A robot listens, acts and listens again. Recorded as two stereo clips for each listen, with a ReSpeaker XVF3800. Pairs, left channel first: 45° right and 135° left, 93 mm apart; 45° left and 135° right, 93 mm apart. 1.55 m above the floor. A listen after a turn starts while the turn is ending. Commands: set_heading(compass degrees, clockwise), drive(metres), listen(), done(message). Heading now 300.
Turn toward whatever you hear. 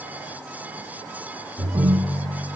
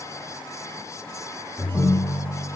set_heading(170)
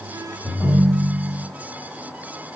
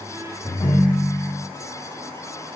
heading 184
set_heading(169)
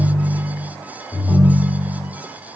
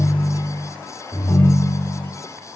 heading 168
done("Found it: a ringtone, straight ahead.")